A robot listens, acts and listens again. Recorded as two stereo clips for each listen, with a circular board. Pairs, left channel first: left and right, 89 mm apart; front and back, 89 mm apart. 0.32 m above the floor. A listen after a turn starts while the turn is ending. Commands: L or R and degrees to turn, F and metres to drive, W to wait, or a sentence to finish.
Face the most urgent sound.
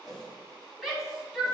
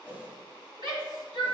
L180
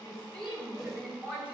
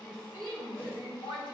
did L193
R10
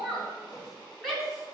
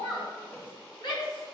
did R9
Facing the shout, 2 to 4 m away.